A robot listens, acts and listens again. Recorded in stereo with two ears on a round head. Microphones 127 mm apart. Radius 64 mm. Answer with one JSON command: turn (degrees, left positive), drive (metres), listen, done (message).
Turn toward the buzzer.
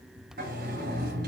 {"listen": true}
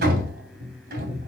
{"listen": true}
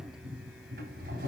{"done": "I can't make out a buzzer, only a sliding door."}